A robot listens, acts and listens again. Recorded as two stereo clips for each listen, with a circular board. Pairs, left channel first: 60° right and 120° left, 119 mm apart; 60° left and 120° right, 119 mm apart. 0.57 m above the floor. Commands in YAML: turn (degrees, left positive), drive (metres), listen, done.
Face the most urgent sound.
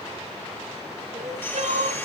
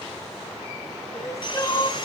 turn: 125
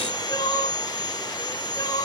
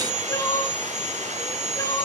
done: "Found it: crying, straight ahead, 2 to 4 m away."